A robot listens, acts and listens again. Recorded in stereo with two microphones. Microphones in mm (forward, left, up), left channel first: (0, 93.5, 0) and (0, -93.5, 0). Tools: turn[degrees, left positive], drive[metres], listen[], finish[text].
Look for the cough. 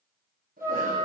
Thought: The cough: about 50° right or 130° right.
Action: turn[-50]
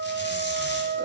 Action: listen[]
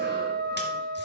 Action: listen[]
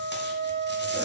Action: finish[I heard a cough, but can't make it out now. It was about straight ahead or 80° right.]